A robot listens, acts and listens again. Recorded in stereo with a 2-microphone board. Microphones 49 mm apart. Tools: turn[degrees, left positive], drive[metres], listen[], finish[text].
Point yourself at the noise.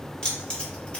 Thought: The keys jangling: about 25° left or 155° left.
Action: turn[25]
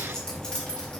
Thought: The keys jangling: about 20° left or 160° left.
Action: turn[20]
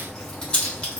Thought: The keys jangling: about 25° left or 155° left.
Action: turn[25]
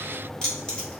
Thought: The keys jangling: about 20° left or 160° left.
Action: turn[20]
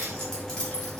Thought: The keys jangling: about 15° left or 165° left.
Action: turn[15]
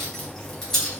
Action: turn[30]
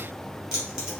Thought: So it is at 20° right.
Action: turn[-20]
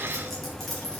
Action: finish[Facing the keys jangling.]